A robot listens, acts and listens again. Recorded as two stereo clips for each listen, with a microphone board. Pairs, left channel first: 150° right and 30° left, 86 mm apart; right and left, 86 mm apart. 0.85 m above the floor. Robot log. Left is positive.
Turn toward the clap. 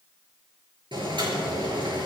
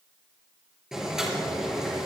cmd idle
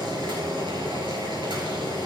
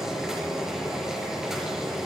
cmd idle
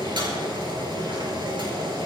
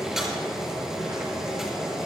end: I can't make out a clap, only boiling.